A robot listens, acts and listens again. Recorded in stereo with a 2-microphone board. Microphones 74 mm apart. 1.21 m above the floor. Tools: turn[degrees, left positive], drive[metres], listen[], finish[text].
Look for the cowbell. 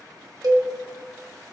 Thought: The cowbell: about 60° right or 120° right.
Action: turn[-60]
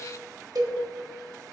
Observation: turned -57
Thought: So it is at 60° right.
Action: turn[-60]
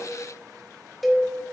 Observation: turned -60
Action: finish[Facing the cowbell, 1 to 2 m away.]